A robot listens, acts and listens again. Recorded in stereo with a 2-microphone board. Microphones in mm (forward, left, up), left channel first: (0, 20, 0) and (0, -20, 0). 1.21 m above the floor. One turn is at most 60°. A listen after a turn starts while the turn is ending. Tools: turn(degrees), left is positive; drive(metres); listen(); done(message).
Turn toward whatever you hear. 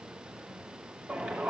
turn(degrees=-35)
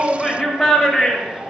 done("Facing the shout, 2 to 4 m away.")